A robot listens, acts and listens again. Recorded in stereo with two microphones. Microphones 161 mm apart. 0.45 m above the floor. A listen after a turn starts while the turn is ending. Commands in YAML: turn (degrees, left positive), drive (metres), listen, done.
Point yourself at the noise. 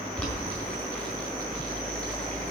turn: 30
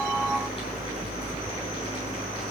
listen: true
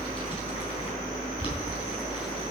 turn: 145
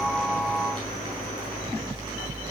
listen: true
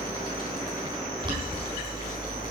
turn: -30
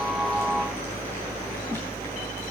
listen: true
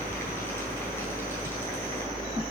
listen: true
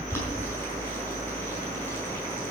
turn: 15
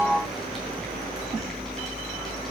listen: true
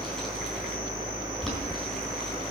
done: "Found it: boiling, straight ahead, 2 to 4 m away."